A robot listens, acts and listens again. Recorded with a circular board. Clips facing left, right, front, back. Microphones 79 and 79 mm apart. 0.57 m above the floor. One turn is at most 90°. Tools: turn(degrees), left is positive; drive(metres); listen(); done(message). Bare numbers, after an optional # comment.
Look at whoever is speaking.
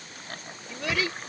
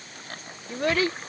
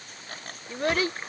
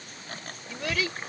# The child speaking: 45° right.
turn(-45)
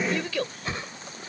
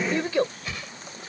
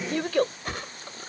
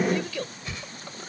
# The child speaking is now 30° right.
turn(-30)
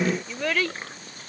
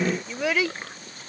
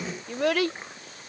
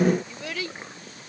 # The child speaking is now 10° right.
turn(-10)
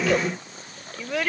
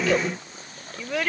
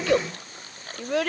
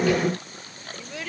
done("Facing the child speaking.")